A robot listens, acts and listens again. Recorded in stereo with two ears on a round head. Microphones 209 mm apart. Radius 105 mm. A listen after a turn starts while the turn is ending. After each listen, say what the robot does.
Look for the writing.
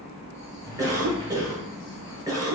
Keep listening.
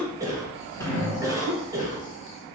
Keep listening.
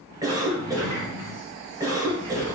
I can't make out writing, only a sliding door and a cough.